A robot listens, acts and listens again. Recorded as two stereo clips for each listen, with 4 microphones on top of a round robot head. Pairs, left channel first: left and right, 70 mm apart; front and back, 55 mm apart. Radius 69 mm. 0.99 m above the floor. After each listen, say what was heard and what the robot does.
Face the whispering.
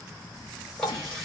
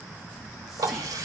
The whispering: 95° left. Turn 95° left.
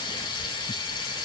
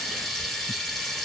Keep listening.
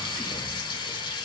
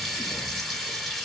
Keep listening.
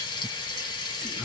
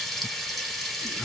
Facing where the whispering came from. I can't hear it now.